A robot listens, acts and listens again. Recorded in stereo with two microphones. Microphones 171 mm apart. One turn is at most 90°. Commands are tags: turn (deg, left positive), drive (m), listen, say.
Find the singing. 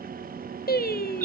<turn deg="60"/>
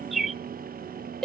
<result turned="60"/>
<say>Facing the singing, under 1 m away.</say>